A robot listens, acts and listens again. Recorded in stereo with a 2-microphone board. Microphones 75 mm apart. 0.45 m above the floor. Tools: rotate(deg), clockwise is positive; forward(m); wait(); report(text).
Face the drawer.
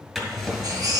rotate(30)
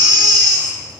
wait()
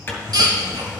rotate(-25)
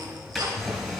report("Facing the drawer, 2 to 4 m away.")